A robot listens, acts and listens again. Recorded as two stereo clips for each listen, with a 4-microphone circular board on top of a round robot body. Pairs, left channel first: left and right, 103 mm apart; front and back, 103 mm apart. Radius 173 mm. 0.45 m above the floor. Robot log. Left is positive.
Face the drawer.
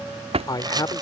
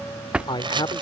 note: The drawer: 100° right.
cmd yaw -100
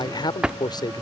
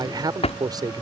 note: The drawer is now 10° right.
cmd yaw -10
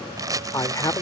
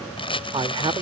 cmd idle
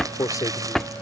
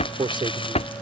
end: Found it: a drawer, straight ahead.